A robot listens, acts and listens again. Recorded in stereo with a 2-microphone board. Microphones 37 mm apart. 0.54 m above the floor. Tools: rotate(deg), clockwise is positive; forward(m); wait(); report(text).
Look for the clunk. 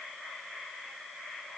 wait()
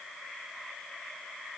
wait()
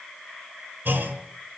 rotate(70)
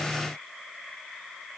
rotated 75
wait()
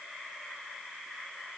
report("I heard a clunk, but can't make it out now. It was about 5° left or 35° right.")